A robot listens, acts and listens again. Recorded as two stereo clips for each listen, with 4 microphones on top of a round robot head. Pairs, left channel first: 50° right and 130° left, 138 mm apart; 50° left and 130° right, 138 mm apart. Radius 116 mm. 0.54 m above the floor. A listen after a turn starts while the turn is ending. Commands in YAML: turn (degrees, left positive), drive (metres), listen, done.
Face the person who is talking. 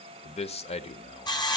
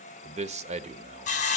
turn: -95
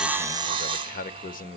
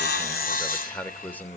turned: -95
turn: -30
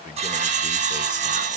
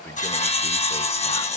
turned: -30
listen: true
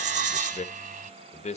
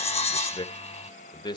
turn: -10
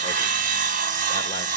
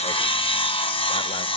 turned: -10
listen: true
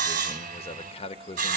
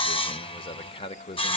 done: "Facing the man speaking."